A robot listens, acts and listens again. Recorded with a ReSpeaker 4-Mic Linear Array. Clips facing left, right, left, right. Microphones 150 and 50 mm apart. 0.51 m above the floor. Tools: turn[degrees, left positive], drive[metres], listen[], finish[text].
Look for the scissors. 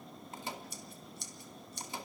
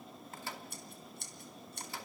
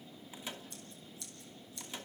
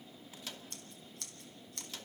Thought: The scissors: about 60° right or 120° right.
Action: turn[-60]
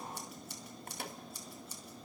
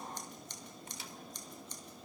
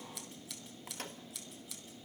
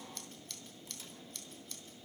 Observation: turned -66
Thought: So it is at 10° left.
Action: turn[10]
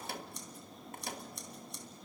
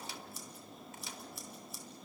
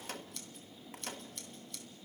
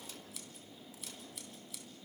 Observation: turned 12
Action: finish[Facing the scissors.]